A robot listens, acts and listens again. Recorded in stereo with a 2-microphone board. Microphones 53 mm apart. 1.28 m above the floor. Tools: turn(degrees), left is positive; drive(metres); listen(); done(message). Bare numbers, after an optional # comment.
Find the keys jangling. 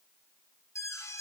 listen()
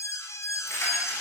# The keys jangling: about 55° left or 125° left.
turn(55)
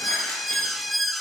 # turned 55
listen()
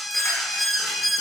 listen()
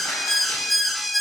done("I heard keys jangling, but can't make it out now. It was about straight ahead or 70° left.")